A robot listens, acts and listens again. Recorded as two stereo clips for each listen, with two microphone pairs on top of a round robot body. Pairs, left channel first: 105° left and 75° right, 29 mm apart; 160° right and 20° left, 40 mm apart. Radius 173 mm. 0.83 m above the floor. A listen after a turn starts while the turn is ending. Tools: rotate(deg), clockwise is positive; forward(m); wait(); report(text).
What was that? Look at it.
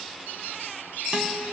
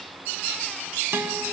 wait()
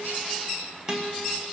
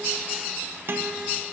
rotate(10)
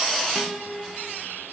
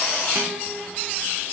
report("Found it: a guitar, straight ahead, 1 to 2 m away.")